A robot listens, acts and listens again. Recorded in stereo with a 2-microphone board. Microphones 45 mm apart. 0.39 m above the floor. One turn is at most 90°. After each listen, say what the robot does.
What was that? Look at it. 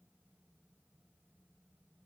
Keep listening.
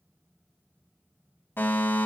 Turn 65° left.
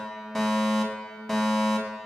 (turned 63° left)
Turn 10° left.
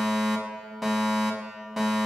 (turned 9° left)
Facing the fire alarm, over 4 m away.